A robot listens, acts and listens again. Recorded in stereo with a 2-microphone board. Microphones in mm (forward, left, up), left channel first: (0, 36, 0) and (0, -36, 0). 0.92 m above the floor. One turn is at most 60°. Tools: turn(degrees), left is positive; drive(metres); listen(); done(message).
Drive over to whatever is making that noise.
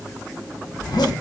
turn(degrees=60)
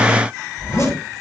turn(degrees=40)
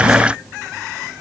listen()
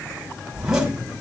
turn(degrees=-10)
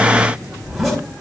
drive(metres=1.0)
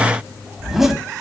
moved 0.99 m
drive(metres=1.0)
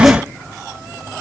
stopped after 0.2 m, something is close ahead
done("Arrived at the zipper, straight ahead.")